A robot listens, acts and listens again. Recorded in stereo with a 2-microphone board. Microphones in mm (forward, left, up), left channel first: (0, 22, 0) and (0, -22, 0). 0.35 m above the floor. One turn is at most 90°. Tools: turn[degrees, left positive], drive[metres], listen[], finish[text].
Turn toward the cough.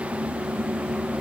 Action: listen[]
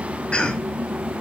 Thought: The cough: about 25° left or 155° left.
Action: turn[25]
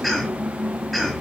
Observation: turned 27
Action: finish[Facing the cough, 2 to 4 m away.]